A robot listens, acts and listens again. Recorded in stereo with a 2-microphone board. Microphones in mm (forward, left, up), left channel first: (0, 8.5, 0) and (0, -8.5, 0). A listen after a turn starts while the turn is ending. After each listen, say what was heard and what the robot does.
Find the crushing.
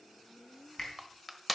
Turn 30° left.
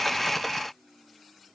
Keep listening.
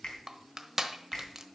So it is at 30° right. Turn 30° right.
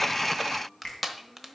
Facing the crushing.